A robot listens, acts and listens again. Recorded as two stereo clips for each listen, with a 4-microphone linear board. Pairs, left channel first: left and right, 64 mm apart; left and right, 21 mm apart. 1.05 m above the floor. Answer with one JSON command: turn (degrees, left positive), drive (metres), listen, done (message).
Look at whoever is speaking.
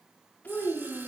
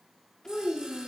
{"turn": 20}
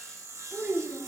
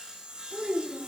{"turn": -20}
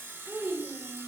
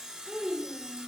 {"turn": -20}
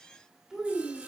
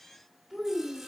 {"turn": -15}
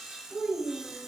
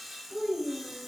{"done": "Found it: a child speaking, straight ahead, 2 to 4 m away."}